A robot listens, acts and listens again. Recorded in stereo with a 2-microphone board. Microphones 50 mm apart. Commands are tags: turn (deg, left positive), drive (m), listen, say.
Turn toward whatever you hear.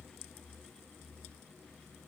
<listen/>
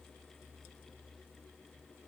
<listen/>
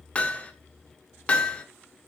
<turn deg="20"/>
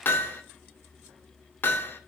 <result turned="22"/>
<turn deg="135"/>
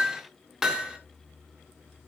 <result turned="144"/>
<turn deg="-10"/>
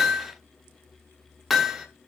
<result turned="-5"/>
<say>Facing the hammering, 2 to 4 m away.</say>